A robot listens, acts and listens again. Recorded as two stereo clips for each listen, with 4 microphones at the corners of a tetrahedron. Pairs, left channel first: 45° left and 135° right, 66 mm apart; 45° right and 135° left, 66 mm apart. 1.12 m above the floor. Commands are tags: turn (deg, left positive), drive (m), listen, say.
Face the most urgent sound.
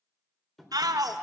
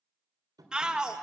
<turn deg="-150"/>
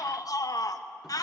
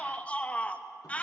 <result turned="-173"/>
<turn deg="25"/>
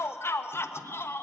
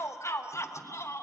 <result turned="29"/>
<say>Found it: a shout, straight ahead, 1 to 2 m away.</say>